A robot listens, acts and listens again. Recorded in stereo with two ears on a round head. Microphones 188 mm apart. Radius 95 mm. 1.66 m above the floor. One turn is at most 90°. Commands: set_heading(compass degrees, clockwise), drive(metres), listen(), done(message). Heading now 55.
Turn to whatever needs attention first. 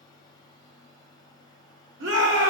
set_heading(115)
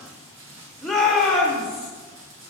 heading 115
done("Found it: a shout, straight ahead.")